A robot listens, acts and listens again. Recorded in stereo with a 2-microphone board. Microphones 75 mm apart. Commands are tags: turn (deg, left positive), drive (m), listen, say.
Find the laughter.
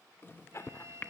<turn deg="40"/>
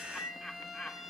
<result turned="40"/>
<turn deg="15"/>
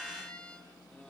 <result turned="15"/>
<listen/>
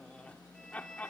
<turn deg="25"/>
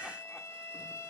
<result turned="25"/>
<listen/>
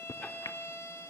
<listen/>
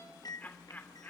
<turn deg="25"/>
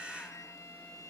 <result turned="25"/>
<listen/>
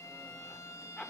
<turn deg="15"/>
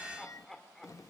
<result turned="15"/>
<say>Found it: laughter, straight ahead.</say>